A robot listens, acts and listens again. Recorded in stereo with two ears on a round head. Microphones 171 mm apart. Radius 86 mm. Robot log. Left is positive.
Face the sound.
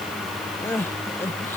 cmd yaw +30
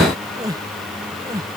note: So it is at 20° right.
cmd yaw -20
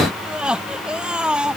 end: Found it: crying, straight ahead.